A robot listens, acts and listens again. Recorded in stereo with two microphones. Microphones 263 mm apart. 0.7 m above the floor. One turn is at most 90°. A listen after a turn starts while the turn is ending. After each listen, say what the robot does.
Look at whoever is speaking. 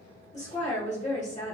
Turn 25° left.
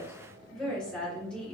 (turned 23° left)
Facing the woman speaking.